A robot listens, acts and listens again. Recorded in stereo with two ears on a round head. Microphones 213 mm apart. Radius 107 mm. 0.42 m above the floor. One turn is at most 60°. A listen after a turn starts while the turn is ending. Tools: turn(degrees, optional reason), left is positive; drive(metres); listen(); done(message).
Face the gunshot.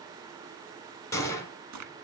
turn(degrees=30)
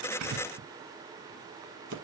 listen()
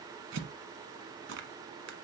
done("I heard a gunshot, but can't make it out now. It was about 15° right or 135° left.")